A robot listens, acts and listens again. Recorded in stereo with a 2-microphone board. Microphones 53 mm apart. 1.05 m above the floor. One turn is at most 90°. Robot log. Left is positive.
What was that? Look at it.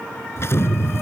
note: The explosion: about 55° left or 125° left.
cmd yaw +55
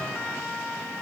cmd idle
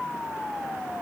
end: I heard an explosion, but can't make it out now. It was about straight ahead or 70° left.